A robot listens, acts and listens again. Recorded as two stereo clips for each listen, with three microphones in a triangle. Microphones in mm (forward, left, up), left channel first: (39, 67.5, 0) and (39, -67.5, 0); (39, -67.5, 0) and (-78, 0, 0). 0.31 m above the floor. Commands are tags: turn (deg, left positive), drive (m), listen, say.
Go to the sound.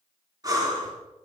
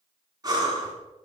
<turn deg="-150"/>
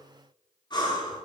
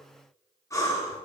<turn deg="35"/>
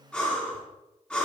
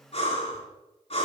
<turn deg="10"/>
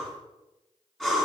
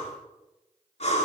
<drive m="1.0"/>
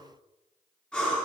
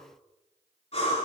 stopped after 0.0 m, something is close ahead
<turn deg="10"/>
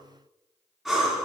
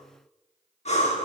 <say>Something is in my way. I am facing the breathing but have not reached it.</say>